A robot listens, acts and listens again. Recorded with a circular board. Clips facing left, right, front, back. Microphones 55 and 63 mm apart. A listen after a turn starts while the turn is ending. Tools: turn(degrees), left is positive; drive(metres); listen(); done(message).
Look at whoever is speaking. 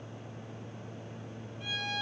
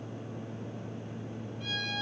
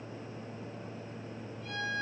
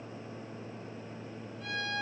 listen()
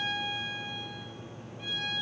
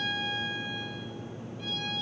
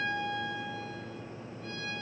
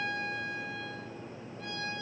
listen()
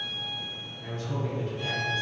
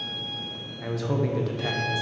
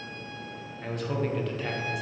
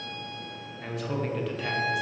turn(degrees=-90)
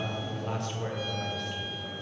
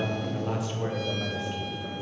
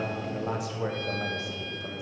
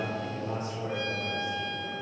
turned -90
done("Facing the man speaking, 1 to 2 m away.")